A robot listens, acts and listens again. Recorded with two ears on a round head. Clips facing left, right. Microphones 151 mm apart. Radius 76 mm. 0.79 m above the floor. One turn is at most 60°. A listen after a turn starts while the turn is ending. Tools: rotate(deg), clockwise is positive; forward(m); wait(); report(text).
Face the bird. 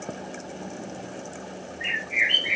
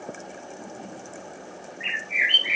rotate(25)
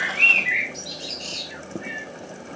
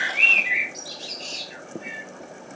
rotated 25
report("Facing the bird, 2 to 4 m away.")